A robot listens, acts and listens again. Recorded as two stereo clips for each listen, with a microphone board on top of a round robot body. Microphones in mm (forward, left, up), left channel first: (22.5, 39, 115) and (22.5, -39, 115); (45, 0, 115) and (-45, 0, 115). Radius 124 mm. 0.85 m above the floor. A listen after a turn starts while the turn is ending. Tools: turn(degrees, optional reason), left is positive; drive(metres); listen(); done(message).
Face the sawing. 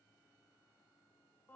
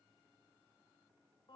listen()
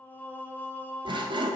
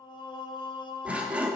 turn(degrees=-105, reason="The sawing: 105° right.")
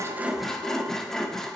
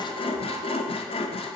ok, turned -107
done("Found it: sawing, straight ahead.")